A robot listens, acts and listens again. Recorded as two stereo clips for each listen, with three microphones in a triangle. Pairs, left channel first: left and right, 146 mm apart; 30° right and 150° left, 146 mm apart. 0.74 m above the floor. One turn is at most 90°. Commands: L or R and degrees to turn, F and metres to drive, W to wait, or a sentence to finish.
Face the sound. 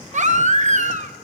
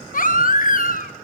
R55
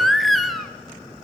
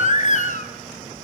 Found it: a baby crying, straight ahead, under 1 m away.